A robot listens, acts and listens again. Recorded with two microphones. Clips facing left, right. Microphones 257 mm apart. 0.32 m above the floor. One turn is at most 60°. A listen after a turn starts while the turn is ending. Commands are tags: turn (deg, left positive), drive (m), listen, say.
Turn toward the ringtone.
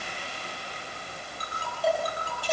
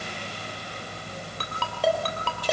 <turn deg="-60"/>
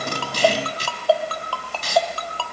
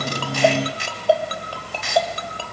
<turn deg="-20"/>
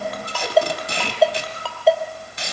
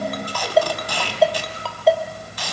<say>Facing the ringtone, 2 to 4 m away.</say>